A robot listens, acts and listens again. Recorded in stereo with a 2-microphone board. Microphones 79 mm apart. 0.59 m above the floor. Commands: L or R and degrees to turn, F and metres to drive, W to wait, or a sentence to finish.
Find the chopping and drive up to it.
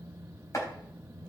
L40
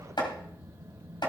L95
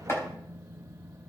L35
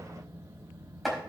F1.0
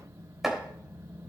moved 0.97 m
F1.0
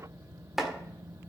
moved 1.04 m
F1.0
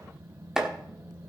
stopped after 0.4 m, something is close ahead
R10
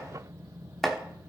Arrived at the chopping, straight ahead.